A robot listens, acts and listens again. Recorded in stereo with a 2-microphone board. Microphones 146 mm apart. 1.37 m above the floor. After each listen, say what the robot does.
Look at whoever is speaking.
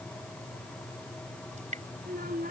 Turn 90° right.
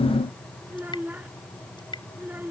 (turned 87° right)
Turn 15° right.
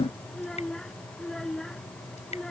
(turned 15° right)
Facing the child speaking.